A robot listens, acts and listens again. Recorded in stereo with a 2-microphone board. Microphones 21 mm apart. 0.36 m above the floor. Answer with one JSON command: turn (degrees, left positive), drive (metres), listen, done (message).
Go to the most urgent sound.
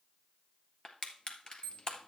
{"turn": 70}
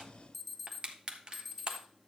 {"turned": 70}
{"turn": 10}
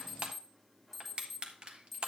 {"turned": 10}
{"drive": 1.0}
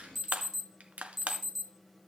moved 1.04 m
{"drive": 1.0}
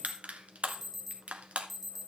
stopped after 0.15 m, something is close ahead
{"done": "Arrived at the alarm, straight ahead."}